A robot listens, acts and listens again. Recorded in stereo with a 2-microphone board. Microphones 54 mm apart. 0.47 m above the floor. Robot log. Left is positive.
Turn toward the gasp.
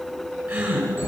note: The gasp: about 20° right or 160° right.
cmd yaw -20
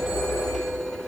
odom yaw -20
cmd idle
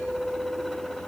end: I heard a gasp, but can't make it out now. It was about straight ahead or 140° right.